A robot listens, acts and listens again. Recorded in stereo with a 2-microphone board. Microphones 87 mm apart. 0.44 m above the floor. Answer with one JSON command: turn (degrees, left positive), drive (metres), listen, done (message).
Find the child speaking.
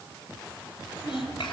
{"turn": 70}
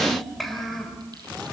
{"done": "Facing the child speaking."}